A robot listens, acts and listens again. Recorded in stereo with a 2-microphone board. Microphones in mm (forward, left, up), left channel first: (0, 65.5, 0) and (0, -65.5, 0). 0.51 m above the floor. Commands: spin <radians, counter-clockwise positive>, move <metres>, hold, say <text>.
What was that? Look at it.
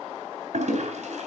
spin -1.05
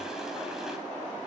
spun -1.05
hold
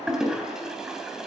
say Found it: a toilet flushing, straight ahead.